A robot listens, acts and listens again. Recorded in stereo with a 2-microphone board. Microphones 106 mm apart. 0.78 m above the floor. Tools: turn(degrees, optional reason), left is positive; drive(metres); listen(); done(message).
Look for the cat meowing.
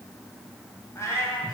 turn(degrees=25, reason="The cat meowing: about 25° left or 155° left.")
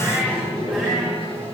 listen()
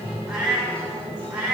turn(degrees=-10, reason="So it is at 10° right.")
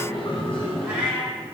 turn(degrees=-10, reason="The cat meowing is now 10° right.")
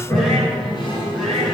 listen()
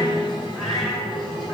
listen()
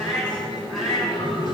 done("Found it: a cat meowing, straight ahead, over 4 m away.")